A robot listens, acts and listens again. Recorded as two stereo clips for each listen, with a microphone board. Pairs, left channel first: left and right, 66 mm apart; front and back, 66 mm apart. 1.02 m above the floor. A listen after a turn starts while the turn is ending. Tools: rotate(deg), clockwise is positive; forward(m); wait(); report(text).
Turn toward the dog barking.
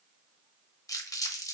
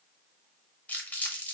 wait()
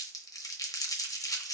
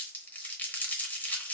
wait()
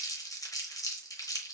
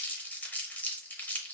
report("I can't make out a dog barking, only crumpling.")